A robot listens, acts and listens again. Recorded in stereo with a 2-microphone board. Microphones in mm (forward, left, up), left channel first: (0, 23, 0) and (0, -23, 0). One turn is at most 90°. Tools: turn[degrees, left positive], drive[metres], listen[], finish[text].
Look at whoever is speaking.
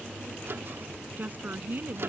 Thought: The woman speaking: about 45° right or 135° right.
Action: turn[-45]
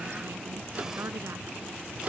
Action: listen[]
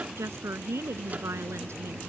Thought: So it is at 100° right.
Action: turn[-90]
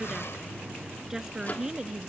Thought: The woman speaking is now 10° right.
Action: turn[-10]
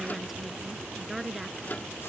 Action: finish[Facing the woman speaking.]